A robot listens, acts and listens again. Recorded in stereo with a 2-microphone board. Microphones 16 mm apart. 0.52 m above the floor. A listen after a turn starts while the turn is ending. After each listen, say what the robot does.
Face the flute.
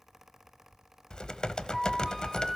Turn 30° left.
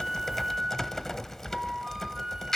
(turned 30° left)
Turn 30° right.
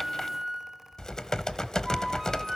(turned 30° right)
Turn 15° right.
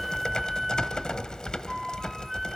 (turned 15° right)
Found it: a flute, straight ahead, 1 to 2 m away.